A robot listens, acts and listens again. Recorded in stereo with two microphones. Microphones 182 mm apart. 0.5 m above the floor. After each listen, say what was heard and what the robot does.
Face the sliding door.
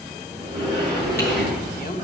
The sliding door: about 25° right or 155° right. Turn 25° right.
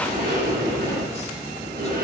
So it is at 130° right. Turn 130° right.
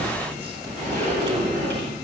The sliding door is now 45° right. Turn 45° right.
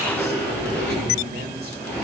The sliding door is now 10° left. Turn 10° left.
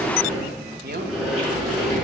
Found it: a sliding door, straight ahead.